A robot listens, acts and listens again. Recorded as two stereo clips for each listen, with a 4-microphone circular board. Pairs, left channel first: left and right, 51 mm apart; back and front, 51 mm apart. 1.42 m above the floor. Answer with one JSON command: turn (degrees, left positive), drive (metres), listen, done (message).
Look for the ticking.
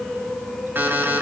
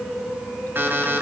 {"listen": true}
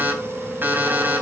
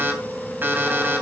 {"listen": true}
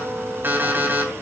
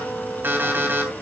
{"done": "I can't make out ticking to turn to."}